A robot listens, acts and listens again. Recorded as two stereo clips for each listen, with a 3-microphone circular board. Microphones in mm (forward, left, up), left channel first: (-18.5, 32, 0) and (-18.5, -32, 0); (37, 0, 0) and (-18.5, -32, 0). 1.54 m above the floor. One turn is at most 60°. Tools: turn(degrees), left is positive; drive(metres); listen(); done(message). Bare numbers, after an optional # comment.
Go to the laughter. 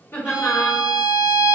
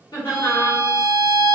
# The laughter: 35° left.
turn(35)
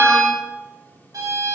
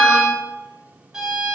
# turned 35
listen()
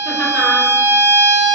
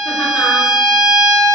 listen()
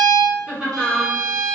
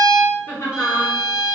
# The laughter is now 10° right.
turn(-10)
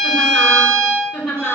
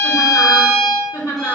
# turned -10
drive(1.0)
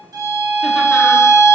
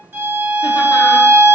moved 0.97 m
listen()
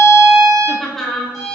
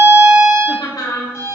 drive(1.0)
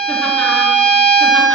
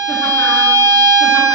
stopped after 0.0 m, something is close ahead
listen()
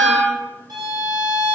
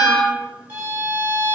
listen()
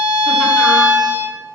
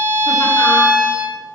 done("Facing where the laughter came from. I can't hear it now. I did not reach it.")